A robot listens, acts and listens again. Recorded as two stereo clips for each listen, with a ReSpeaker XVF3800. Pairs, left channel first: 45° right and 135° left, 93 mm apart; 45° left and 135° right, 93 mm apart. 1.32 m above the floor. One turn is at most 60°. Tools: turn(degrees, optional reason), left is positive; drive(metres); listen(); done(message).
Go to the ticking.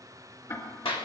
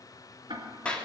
turn(degrees=-60, reason="The ticking: 100° right.")
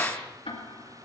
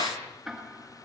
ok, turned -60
turn(degrees=-45, reason="The ticking is now 45° right.")
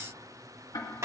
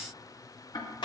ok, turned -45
turn(degrees=10, reason="The ticking is now 10° left.")
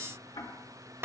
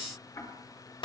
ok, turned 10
drive(metres=1.0)
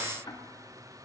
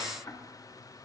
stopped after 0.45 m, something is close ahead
done("Something is in my way. I am facing the ticking but have not reached it.")